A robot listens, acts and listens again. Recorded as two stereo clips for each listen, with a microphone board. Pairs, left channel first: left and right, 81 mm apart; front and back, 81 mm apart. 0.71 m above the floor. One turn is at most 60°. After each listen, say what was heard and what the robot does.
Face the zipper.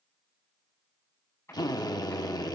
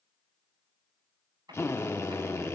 The zipper: 145° left. Turn 60° left.
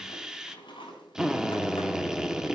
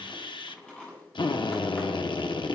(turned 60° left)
The zipper is now 80° left. Turn 60° left.
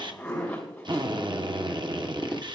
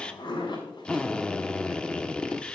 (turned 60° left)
The zipper is now 15° left. Turn 15° left.
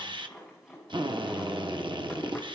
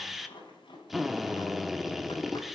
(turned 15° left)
Facing the zipper.